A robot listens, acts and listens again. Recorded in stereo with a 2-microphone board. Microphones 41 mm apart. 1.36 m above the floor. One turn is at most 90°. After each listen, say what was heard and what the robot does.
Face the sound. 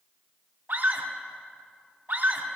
The scream: about 50° right or 130° right. Turn 50° right.
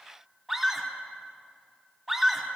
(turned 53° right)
Found it: a scream, straight ahead, 2 to 4 m away.